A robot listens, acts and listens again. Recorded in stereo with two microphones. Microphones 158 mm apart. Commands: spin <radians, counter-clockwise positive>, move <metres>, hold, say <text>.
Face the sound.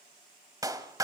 spin -0.35
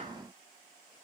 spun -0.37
hold
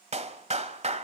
spin -2.36
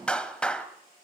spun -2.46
say Found it: a clap, straight ahead.